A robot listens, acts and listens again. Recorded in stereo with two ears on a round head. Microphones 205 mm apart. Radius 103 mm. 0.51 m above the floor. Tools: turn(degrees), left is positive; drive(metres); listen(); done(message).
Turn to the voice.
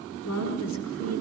turn(degrees=90)
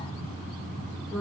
done("Found it: a woman speaking, straight ahead.")